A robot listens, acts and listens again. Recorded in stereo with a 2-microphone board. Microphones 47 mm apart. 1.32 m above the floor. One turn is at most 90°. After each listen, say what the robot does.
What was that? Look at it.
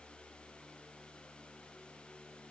Keep listening.
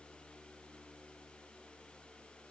Keep listening.
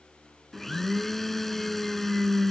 Turn 30° left.
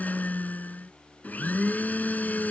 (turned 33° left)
Turn 90° left.
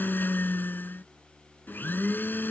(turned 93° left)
Turn 50° left.
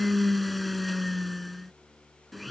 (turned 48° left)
Facing the blender.